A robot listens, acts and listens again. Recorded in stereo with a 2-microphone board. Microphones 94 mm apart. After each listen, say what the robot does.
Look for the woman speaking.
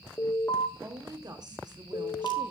Turn 45° right.
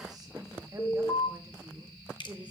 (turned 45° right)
Turn 15° right.
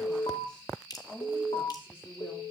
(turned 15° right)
Turn 20° left.
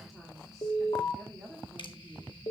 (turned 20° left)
Facing the woman speaking, 2 to 4 m away.